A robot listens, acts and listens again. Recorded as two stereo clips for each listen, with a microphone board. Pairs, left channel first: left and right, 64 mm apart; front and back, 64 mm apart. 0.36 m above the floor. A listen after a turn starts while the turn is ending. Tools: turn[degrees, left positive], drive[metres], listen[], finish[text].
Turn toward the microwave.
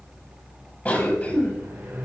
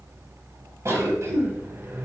Thought: The microwave: 130° right.
Action: turn[-130]
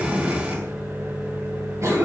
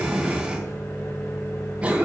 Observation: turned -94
Thought: The microwave is now 40° right.
Action: turn[-40]
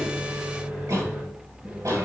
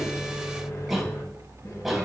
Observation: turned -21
Thought: The microwave is now 20° right.
Action: turn[-20]
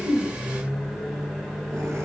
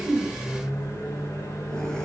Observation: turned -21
Action: finish[Facing the microwave, 1 to 2 m away.]